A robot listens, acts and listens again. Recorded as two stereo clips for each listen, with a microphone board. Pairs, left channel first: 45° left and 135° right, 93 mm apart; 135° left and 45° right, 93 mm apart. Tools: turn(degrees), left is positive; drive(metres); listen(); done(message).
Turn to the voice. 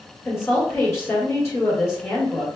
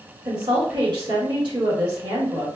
turn(degrees=-10)
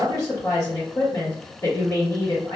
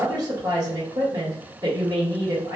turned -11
done("Facing the woman speaking.")